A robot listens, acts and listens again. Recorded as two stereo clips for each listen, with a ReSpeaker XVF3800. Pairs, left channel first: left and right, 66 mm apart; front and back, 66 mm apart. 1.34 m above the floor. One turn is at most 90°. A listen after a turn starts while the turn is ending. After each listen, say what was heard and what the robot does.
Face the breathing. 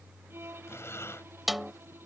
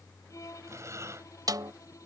The breathing: 140° left. Turn 90° left.
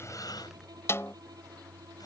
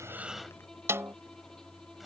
Nothing new. It was at 50° left. Turn 50° left.
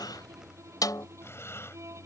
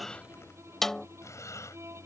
The breathing is now 40° left. Turn 40° left.
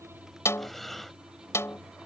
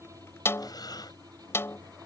Found it: breathing, straight ahead.